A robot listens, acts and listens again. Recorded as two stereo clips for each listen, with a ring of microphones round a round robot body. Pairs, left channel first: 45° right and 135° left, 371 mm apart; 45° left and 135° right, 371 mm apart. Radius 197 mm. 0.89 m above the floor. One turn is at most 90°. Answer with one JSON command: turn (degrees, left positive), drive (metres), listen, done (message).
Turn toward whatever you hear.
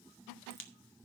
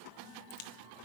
{"turn": 15}
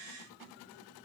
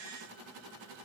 {"done": "Facing where the crack came from. I can't hear it now."}